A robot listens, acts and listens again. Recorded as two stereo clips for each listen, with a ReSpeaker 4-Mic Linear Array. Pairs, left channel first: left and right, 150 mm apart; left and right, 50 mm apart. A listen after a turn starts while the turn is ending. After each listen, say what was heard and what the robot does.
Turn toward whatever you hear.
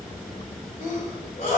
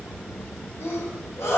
The sneeze: about 65° left or 115° left. Turn 65° left.
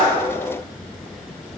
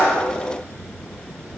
Keep listening.
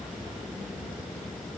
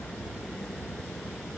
I heard a sneeze, but can't make it out now. It was about straight ahead or 50° left.